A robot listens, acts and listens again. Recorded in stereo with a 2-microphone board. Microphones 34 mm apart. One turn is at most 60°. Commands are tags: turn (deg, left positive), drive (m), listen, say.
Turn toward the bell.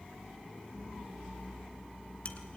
<listen/>
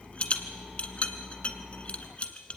<listen/>
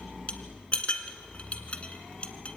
<say>I can't make out a bell to turn to.</say>